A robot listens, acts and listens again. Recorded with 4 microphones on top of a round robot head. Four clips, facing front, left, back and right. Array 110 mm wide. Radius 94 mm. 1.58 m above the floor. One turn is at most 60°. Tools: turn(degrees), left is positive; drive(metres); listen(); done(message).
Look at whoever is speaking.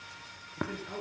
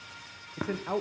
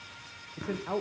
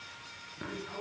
turn(degrees=60)
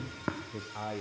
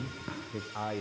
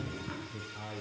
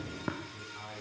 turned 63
turn(degrees=60)
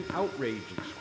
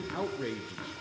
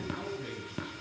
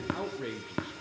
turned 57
done("Found it: a man speaking, straight ahead, under 1 m away.")